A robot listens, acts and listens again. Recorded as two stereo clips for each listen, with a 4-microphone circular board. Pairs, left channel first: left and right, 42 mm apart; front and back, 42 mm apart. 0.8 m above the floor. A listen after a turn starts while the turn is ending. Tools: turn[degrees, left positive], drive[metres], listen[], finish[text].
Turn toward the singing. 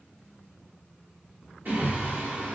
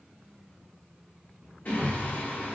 Thought: The singing: 45° right.
Action: turn[-45]
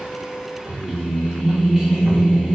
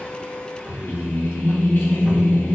Action: finish[Found it: singing, straight ahead, under 1 m away.]